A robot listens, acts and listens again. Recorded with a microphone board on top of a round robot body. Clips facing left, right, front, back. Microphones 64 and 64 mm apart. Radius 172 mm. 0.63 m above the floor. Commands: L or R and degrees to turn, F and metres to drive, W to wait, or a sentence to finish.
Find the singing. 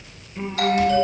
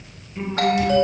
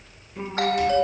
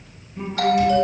Facing the singing.